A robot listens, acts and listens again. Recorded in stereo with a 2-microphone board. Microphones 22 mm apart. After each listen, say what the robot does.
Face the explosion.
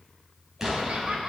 Turn 20° right.
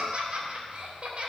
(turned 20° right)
Keep listening.
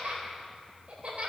I heard an explosion, but can't make it out now. It was about straight ahead or 140° right.